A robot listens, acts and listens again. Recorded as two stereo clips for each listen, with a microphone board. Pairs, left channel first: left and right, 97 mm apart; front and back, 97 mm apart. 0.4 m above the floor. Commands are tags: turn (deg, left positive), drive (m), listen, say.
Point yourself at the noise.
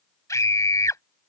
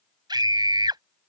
<turn deg="145"/>
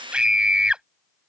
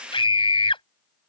<turn deg="-10"/>
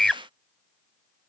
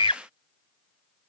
<say>Found it: a scream, straight ahead.</say>